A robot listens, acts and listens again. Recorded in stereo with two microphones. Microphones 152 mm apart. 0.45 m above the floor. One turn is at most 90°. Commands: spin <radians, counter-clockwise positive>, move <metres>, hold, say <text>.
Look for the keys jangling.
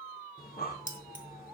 spin 1.05
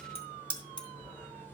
spin 0.52
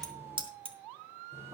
spin -0.61
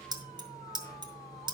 spin -0.52
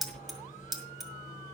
say Found it: keys jangling, straight ahead.